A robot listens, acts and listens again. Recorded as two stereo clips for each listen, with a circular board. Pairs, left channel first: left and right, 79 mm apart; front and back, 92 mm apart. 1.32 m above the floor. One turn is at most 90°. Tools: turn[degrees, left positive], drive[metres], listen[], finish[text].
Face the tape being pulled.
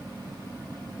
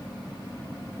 Action: listen[]
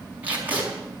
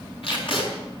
Thought: The tape being pulled: 20° right.
Action: turn[-20]
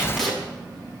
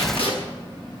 Action: finish[Facing the tape being pulled.]